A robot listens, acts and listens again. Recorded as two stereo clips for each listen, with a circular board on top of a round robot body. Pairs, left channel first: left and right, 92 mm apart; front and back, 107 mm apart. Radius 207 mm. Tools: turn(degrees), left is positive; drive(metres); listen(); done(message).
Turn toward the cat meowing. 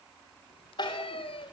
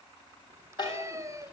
turn(degrees=120)
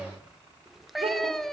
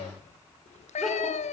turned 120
done("Facing the cat meowing, 1 to 2 m away.")